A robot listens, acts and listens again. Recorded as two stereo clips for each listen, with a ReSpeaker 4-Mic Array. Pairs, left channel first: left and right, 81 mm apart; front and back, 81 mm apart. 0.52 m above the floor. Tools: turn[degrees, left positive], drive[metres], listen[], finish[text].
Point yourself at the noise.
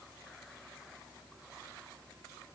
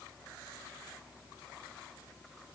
Action: listen[]
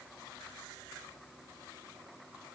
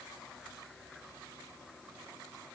Action: listen[]
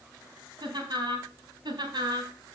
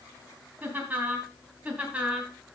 Thought: The laughter: 105° right.
Action: turn[-105]
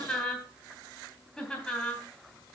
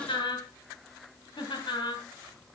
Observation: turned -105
Thought: The laughter is now 10° left.
Action: turn[10]
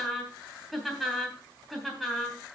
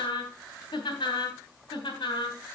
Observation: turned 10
Action: finish[Found it: laughter, straight ahead, 2 to 4 m away.]